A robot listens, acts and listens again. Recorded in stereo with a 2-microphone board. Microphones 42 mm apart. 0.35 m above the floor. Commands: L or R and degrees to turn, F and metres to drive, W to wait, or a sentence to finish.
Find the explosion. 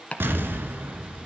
R55
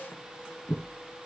W
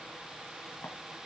I heard an explosion, but can't make it out now. It was about straight ahead or 70° right.